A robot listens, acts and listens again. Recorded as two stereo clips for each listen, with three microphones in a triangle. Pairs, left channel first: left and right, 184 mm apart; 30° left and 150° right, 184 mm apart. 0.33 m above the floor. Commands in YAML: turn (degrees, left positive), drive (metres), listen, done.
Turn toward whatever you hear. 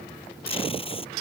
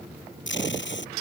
turn: 30
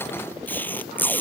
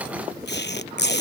turn: 10
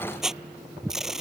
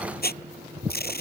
done: "Facing the tape being pulled."